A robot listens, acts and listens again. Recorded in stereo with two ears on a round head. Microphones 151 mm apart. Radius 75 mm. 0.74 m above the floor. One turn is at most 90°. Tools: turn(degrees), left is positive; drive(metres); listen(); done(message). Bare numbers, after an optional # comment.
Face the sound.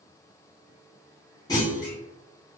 # The clunk: about 20° left or 160° left.
turn(20)
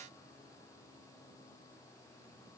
listen()
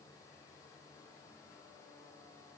done("I heard a clunk, but can't make it out now. It was about straight ahead or 140° left.")